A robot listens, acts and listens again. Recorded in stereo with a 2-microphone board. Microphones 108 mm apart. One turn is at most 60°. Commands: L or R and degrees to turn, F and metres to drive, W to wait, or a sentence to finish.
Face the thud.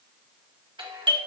W
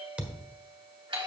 R30
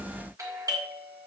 W
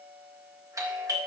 I heard a thud, but can't make it out now. It was about 15° left or 135° right.